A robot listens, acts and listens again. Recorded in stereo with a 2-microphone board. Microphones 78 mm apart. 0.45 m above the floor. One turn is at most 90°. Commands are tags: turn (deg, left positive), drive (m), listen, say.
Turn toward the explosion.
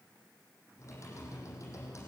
<listen/>
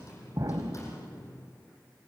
<turn deg="-60"/>
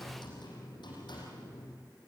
<listen/>
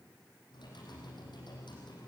<say>I heard an explosion, but can't make it out now. It was about straight ahead or 60° right.</say>